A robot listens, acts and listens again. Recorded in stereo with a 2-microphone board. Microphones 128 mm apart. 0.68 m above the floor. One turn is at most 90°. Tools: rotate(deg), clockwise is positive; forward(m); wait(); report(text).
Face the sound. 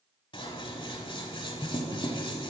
rotate(-40)
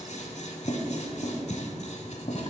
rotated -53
rotate(-80)
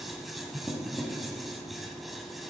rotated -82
report("Found it: scissors, straight ahead.")